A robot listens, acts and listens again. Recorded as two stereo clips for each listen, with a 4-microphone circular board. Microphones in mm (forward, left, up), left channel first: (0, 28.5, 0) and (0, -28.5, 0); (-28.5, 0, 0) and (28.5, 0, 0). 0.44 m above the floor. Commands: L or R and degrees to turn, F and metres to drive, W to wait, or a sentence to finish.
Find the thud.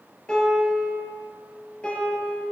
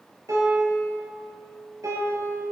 W
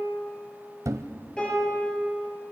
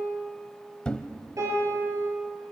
R110
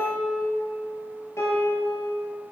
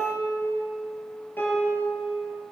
Facing where the thud came from. I can't hear it now.